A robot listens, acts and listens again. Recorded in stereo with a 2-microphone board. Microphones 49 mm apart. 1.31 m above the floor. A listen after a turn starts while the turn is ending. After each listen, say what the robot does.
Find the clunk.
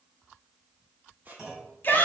Turn 30° right.
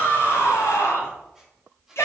Keep listening.
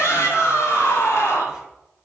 I heard a clunk, but can't make it out now. It was about 20° left or 140° right.